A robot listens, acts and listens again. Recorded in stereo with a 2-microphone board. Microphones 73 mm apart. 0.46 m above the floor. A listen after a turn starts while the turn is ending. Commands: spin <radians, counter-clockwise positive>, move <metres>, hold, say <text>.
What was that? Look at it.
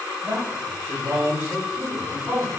spin -0.79
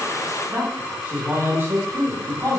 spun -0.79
spin -0.70
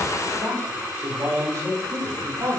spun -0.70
spin -0.87
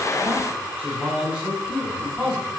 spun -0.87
spin -0.26
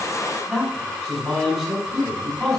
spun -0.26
say Found it: a man speaking, straight ahead, 1 to 2 m away.